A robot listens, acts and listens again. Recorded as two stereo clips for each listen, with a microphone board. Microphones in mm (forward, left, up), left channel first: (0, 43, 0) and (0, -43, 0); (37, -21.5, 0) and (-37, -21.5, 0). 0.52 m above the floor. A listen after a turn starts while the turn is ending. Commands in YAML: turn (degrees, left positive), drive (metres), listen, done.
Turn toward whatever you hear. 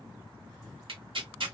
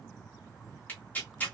turn: -70
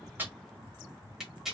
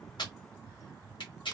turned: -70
done: "Facing the tearing paper, 1 to 2 m away."